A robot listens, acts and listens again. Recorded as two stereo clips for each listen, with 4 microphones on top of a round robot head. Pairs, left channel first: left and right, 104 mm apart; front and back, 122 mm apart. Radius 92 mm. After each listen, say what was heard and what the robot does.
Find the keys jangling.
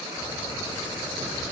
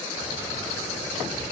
The keys jangling: 145° left. Turn 145° left.
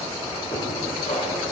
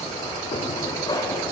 The keys jangling is now 60° left. Turn 60° left.
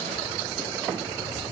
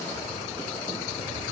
The keys jangling is now 30° left. Turn 30° left.
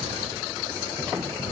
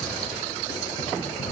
Found it: keys jangling, straight ahead.